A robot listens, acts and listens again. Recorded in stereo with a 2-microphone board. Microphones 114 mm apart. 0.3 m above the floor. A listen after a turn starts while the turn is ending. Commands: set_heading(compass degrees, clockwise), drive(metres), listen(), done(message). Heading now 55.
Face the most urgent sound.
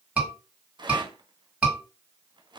set_heading(85)
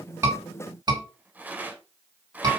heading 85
set_heading(225)
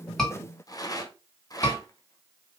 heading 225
set_heading(205)
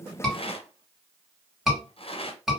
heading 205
done("Found it: a scream, straight ahead, 2 to 4 m away.")